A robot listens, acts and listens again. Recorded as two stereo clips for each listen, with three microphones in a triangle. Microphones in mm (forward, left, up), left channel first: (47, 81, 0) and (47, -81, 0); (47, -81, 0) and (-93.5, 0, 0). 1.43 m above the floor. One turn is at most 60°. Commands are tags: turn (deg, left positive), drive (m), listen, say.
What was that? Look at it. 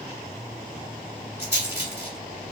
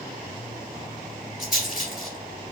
<turn deg="-20"/>
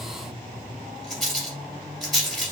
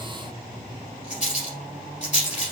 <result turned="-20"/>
<say>Facing the rattle, 2 to 4 m away.</say>